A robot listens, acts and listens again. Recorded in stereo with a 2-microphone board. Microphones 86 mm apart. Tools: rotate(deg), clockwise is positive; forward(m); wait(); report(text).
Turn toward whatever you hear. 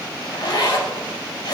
rotate(-50)
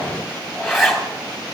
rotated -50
report("Facing the zipper.")